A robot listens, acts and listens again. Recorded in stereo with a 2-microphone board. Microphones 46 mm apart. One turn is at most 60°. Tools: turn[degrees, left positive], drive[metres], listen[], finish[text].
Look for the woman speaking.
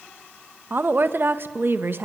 Thought: The woman speaking: about 50° right or 130° right.
Action: turn[-50]
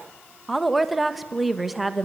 Action: finish[Found it: a woman speaking, straight ahead, 1 to 2 m away.]